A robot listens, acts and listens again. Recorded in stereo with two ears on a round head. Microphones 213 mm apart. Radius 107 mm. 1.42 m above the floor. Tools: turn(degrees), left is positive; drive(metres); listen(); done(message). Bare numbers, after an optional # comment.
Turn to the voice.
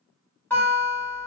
listen()
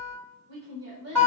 # The woman speaking: about 45° right or 135° right.
turn(-45)
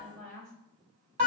done("Found it: a woman speaking, straight ahead.")